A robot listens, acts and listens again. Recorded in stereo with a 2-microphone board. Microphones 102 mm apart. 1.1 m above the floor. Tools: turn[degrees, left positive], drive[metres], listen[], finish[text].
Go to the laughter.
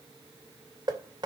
Action: listen[]
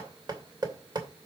Action: listen[]
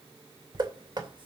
Thought: The laughter: about 55° right or 125° right.
Action: turn[-55]
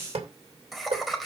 Action: drive[1.0]
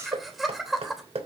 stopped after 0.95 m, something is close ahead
Action: finish[Blocked. The laughter is further on, straight ahead.]